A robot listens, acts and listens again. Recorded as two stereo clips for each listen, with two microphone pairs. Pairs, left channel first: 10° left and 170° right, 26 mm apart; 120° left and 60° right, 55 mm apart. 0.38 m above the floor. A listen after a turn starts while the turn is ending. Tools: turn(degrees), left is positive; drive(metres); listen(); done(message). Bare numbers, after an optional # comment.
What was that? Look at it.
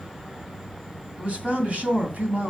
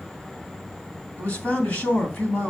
# The man speaking: 170° left.
turn(170)
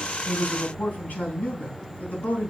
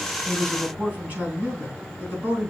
done("Found it: a man speaking, straight ahead, 2 to 4 m away.")